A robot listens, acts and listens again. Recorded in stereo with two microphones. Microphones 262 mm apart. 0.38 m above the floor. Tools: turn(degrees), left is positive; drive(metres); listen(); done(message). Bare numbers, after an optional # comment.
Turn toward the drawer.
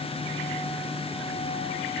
listen()
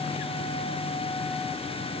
listen()
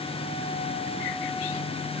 done("I can't make out a drawer.")